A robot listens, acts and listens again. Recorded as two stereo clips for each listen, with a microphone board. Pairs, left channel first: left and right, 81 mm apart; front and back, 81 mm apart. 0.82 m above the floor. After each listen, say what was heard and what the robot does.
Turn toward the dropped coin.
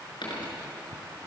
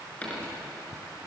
The dropped coin: 75° left. Turn 75° left.
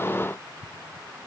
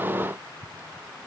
Facing where the dropped coin came from. I can't hear it now.